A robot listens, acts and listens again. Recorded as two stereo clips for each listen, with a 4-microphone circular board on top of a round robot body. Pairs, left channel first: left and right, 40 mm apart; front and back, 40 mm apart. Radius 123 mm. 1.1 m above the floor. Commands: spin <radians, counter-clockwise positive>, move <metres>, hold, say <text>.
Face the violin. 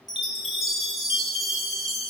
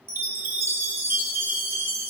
hold
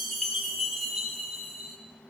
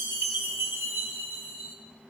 hold
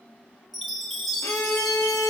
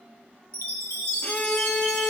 spin 1.13
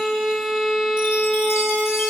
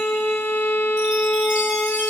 say Found it: a violin, straight ahead, 1 to 2 m away.